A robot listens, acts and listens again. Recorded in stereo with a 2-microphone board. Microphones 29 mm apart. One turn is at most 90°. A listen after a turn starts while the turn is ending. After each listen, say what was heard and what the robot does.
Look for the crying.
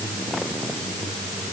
Keep listening.
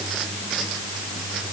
Keep listening.
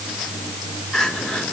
The crying: about 30° left or 150° left. Turn 30° left.
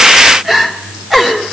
Facing the crying.